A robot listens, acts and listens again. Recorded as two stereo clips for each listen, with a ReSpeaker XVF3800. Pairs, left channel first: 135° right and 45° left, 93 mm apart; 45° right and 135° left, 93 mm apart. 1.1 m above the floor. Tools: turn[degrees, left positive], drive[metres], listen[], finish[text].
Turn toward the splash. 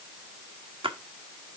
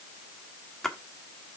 Thought: The splash: 40° left.
Action: turn[40]
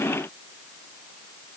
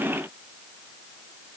Action: finish[I heard a splash from this way, but can't make it out now.]